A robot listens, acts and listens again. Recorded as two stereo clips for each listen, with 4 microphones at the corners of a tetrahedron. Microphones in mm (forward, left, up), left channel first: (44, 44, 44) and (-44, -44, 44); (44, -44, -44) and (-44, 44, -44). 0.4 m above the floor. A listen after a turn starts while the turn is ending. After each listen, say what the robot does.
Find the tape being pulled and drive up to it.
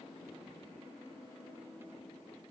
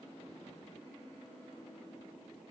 Keep listening.
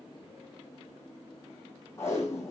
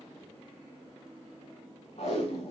Turn 20° right.
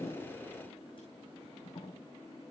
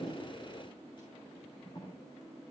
Drive 1.0 m forward.
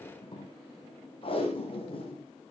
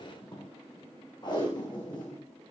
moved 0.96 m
Drive 1.0 m forward.
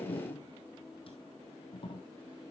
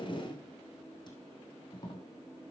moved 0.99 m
Drive 1.0 m forward.
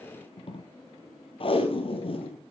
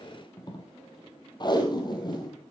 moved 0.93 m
Drive 1.0 m forward.
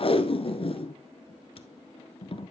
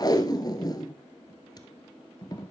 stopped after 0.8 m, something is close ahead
Turn 10° left.
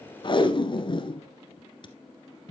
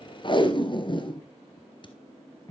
I am next to the tape being pulled.